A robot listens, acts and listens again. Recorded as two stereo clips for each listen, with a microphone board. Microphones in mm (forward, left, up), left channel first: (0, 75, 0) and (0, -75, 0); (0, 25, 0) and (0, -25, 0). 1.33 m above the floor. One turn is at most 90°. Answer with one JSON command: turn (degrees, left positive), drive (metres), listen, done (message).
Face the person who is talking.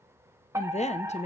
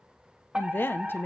{"turn": 45}
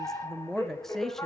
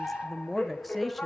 {"done": "Facing the woman speaking, under 1 m away."}